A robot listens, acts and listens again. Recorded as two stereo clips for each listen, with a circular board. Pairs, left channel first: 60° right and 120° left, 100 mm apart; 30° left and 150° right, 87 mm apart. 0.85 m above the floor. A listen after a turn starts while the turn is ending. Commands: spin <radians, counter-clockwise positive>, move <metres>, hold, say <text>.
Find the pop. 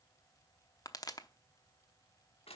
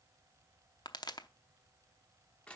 spin -0.17
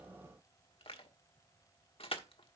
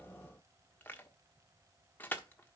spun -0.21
say Facing where the pop came from. I can't hear it now.